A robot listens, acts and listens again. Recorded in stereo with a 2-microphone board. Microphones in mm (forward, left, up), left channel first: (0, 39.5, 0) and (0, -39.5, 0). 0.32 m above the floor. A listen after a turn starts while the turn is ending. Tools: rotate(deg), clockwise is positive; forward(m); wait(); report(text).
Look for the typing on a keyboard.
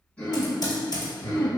rotate(-60)
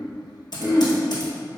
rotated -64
rotate(-60)
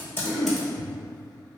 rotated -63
wait()
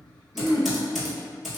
report("Found it: typing on a keyboard, straight ahead.")